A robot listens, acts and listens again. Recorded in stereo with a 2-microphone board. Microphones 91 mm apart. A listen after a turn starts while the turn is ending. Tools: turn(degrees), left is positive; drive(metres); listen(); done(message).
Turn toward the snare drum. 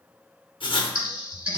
listen()
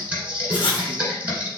listen()
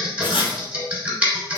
done("I can't make out a snare drum, only writing and typing on a keyboard.")